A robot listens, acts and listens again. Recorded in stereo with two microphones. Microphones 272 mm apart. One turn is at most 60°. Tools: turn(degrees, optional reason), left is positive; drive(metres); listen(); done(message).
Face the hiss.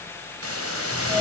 turn(degrees=-60, reason="The hiss: about 60° right or 120° right.")
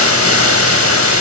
turn(degrees=-60, reason="So it is at 60° right.")
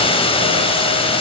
turn(degrees=20, reason="The hiss is now 20° left.")
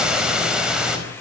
done("Facing the hiss, over 4 m away.")